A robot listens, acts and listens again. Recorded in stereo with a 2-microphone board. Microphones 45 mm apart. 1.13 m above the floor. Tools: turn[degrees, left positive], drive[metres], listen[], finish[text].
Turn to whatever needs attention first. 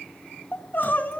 Thought: The crying: about 40° left or 140° left.
Action: turn[40]
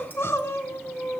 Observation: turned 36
Thought: So it is at 100° left.
Action: turn[100]
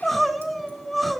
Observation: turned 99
Action: finish[Facing the crying, 1 to 2 m away.]